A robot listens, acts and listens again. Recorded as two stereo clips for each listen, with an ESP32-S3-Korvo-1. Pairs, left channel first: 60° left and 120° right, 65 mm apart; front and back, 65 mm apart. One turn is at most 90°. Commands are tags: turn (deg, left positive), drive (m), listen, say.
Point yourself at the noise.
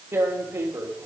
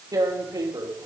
<turn deg="-90"/>
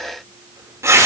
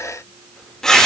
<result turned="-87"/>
<turn deg="-80"/>
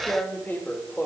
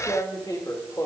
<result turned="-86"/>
<say>Found it: tearing paper, straight ahead.</say>